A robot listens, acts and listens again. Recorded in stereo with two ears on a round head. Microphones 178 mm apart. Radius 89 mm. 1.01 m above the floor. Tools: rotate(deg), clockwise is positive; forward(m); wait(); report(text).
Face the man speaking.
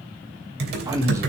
rotate(30)
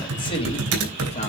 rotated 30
rotate(-35)
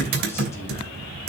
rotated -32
wait()
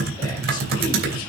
wait()
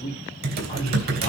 rotate(-30)
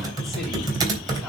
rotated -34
wait()
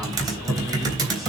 wait()
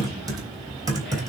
report("Facing where the man speaking came from. I can't hear it now.")